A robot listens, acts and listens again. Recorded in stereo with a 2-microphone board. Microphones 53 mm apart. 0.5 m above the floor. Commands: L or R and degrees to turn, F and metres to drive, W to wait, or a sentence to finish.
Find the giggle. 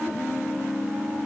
W
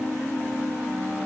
W
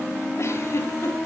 L65
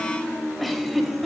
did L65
Facing the giggle, over 4 m away.